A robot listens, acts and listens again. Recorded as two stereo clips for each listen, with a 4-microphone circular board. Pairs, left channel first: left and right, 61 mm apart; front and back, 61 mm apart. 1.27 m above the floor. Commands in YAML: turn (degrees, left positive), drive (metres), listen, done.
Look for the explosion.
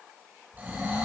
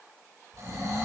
turn: -10
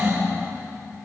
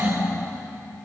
done: "Facing where the explosion came from. I can't hear it now."